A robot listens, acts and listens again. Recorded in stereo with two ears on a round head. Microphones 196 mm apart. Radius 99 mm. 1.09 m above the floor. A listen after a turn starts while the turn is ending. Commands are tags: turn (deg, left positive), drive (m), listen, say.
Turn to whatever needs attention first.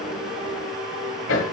<listen/>
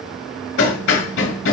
<listen/>
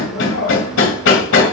<say>I can't make out anything urgent, only hammering.</say>